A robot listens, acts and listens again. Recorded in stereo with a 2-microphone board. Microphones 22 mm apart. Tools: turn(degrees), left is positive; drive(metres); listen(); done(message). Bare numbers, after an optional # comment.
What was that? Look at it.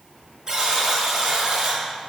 # The buzzer: about 30° right or 150° right.
turn(-30)
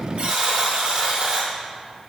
# So it is at 120° right.
turn(-120)
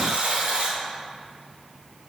# The buzzer is now 60° right.
turn(-60)
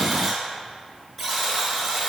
done("Found it: a buzzer, straight ahead, 1 to 2 m away.")